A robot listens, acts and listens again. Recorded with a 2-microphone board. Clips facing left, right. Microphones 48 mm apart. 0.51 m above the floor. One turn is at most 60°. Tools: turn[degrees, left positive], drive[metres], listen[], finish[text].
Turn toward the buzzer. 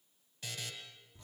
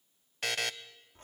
Action: turn[-60]
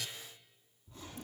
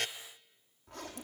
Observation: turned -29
Thought: So it is at 60° right.
Action: turn[-60]
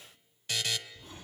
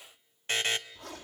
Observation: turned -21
Thought: The buzzer is now 40° right.
Action: turn[-40]
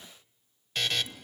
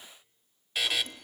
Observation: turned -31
Thought: The buzzer is now 10° right.
Action: turn[-10]
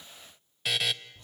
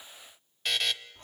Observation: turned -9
Action: finish[Facing the buzzer.]